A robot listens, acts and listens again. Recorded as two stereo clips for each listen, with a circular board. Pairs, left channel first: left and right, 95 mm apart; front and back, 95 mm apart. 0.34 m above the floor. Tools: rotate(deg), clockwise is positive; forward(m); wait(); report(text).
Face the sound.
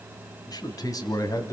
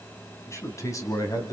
rotate(-40)
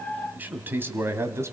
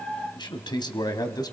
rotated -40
rotate(35)
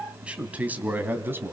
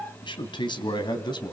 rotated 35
rotate(30)
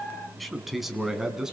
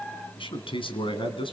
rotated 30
report("Found it: a man speaking, straight ahead, 2 to 4 m away.")